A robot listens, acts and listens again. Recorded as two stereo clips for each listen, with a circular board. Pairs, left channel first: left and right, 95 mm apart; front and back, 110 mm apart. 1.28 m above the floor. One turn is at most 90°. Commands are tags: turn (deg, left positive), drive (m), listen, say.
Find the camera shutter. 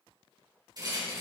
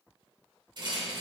<listen/>
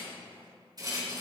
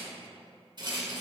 <listen/>
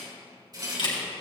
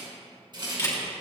<turn deg="65"/>
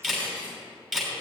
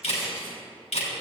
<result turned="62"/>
<say>Found it: a camera shutter, straight ahead, 2 to 4 m away.</say>